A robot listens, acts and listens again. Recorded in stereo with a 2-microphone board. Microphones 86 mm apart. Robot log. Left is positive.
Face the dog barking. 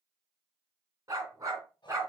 note: The dog barking: about 35° right or 145° right.
cmd yaw -35
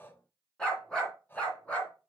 note: So it is at 15° left.
cmd yaw +15
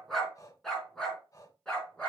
note: The dog barking is now 10° left.
cmd yaw +10
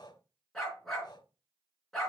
end: Facing the dog barking.